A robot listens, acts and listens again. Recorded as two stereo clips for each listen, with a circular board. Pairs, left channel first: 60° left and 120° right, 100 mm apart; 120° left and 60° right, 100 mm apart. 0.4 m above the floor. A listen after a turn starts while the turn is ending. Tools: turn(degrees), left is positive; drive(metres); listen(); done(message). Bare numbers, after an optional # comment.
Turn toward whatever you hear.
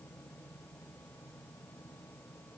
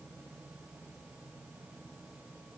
listen()
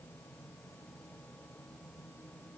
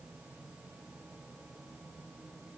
listen()
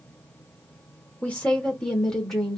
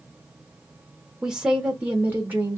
# The woman speaking: 25° right.
turn(-25)
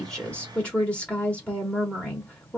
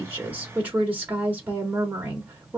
done("Found it: a woman speaking, straight ahead, 1 to 2 m away.")